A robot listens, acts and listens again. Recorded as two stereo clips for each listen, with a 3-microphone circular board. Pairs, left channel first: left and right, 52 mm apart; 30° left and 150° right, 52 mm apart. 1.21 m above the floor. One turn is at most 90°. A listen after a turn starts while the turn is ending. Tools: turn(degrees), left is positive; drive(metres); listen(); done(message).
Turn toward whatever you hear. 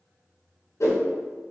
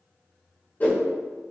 turn(degrees=85)
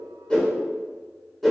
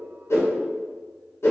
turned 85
done("Facing the whoosh.")